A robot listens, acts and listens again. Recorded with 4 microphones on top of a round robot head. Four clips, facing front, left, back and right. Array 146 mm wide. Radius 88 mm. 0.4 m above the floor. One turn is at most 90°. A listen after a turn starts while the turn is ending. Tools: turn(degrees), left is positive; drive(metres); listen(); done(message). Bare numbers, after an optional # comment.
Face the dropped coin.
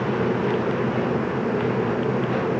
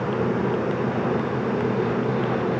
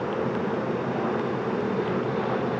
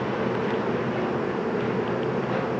listen()
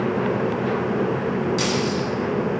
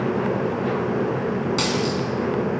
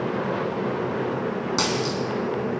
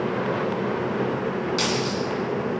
# The dropped coin: 155° left.
turn(90)
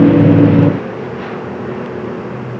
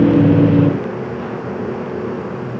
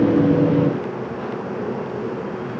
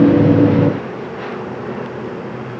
# Nothing new. It was at 65° left.
turn(65)
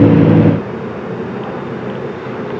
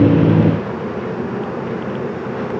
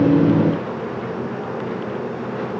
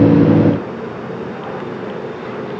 done("I heard a dropped coin from this way, but can't make it out now.")